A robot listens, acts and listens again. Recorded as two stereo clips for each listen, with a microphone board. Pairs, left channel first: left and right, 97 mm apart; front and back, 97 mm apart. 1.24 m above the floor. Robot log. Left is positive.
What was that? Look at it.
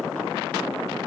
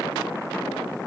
cmd idle
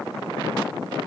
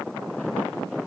cmd idle
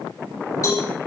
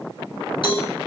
note: The cowbell: 35° left.
cmd yaw +35
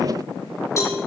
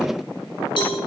note: The cowbell is now 30° left.
cmd yaw +30
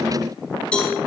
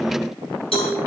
note: The cowbell is now 10° left.
cmd yaw +10
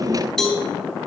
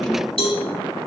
end: Facing the cowbell, over 4 m away.